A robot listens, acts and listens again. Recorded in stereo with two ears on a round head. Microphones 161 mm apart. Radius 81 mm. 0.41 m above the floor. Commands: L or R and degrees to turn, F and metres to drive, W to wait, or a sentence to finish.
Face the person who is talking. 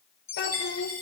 L55
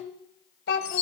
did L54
L60
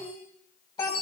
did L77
L25
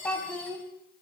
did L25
L10
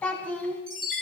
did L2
L10
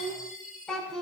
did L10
Facing the child speaking, 2 to 4 m away.